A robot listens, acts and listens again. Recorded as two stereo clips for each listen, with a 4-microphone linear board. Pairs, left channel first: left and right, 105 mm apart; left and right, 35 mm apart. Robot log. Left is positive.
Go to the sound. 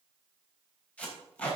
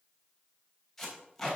cmd yaw +30
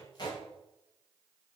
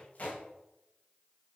note: So it is at 135° left.
cmd yaw +135
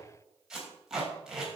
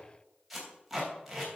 cmd fwd 1.0
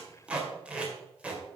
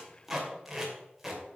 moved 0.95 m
note: The tape being pulled is now 10° right.
cmd yaw -10
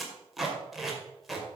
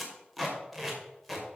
cmd fwd 1.0
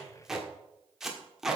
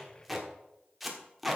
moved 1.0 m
cmd fwd 1.0
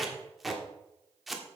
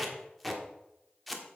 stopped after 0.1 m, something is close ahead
end: Arrived at the tape being pulled, straight ahead.